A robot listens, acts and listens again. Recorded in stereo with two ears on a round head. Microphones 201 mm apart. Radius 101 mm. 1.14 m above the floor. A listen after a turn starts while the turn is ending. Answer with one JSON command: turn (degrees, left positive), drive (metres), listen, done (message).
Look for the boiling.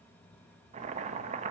{"turn": -30}
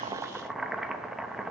{"done": "Facing the boiling."}